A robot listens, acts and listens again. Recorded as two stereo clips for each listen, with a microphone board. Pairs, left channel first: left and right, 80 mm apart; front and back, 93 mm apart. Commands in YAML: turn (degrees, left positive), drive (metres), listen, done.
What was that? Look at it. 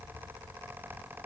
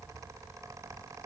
listen: true
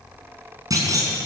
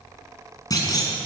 turn: -45
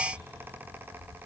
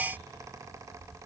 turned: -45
done: "Facing where the clunk came from. I can't hear it now."